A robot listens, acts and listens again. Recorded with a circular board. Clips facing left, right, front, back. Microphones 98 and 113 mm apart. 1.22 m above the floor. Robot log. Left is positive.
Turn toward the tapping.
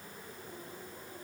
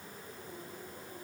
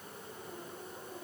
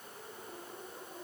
cmd idle
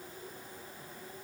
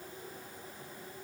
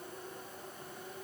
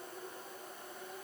cmd idle
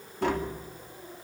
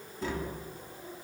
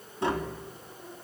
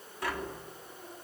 note: The tapping: 65° left.
cmd yaw +65
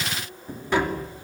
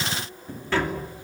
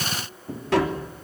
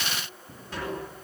note: The tapping is now 15° left.
cmd yaw +15
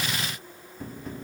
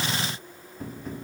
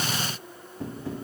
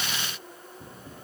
end: Facing the tapping.